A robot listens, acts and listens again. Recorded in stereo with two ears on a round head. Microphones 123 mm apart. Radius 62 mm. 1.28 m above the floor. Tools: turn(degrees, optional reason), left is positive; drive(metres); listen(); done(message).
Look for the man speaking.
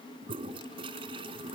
listen()
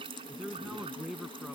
turn(degrees=30)
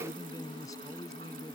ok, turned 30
turn(degrees=155, reason="So it is at 155° left.")
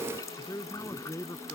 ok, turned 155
turn(degrees=20, reason="The man speaking is now 20° left.")
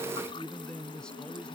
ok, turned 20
done("Facing the man speaking.")